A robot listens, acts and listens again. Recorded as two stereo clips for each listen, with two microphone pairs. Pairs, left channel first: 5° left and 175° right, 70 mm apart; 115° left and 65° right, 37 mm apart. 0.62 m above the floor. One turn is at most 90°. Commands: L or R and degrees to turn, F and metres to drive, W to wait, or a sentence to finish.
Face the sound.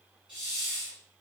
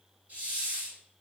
R90
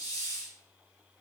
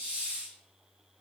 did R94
Facing the hiss, 1 to 2 m away.